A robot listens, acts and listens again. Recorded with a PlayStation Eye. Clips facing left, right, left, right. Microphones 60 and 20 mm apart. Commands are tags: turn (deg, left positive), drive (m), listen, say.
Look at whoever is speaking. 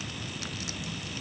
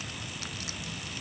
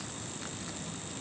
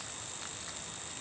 <listen/>
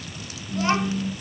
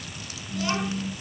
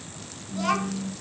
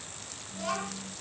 <turn deg="35"/>
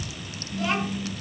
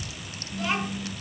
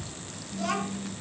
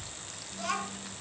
<say>Facing the child speaking, over 4 m away.</say>